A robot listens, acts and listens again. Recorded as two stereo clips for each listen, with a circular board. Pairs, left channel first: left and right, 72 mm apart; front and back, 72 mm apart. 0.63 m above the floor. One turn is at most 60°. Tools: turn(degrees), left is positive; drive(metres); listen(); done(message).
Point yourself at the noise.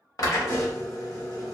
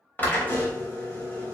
turn(degrees=60)
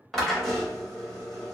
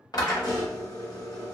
done("Found it: a drill, straight ahead, 1 to 2 m away.")